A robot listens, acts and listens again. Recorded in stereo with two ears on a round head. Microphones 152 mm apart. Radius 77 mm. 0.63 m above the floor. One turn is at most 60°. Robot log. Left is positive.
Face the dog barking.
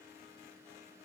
cmd idle
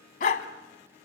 note: The dog barking: about 45° left or 135° left.
cmd yaw +45
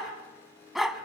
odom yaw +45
end: Found it: a dog barking, straight ahead.